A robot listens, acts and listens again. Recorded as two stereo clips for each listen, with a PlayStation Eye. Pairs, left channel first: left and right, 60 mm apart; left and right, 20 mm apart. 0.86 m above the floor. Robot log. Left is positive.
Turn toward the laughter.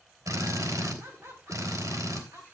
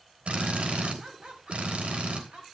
note: The laughter: about 55° right or 125° right.
cmd yaw -55
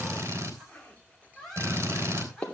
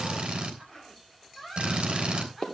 end: Found it: laughter, straight ahead, over 4 m away.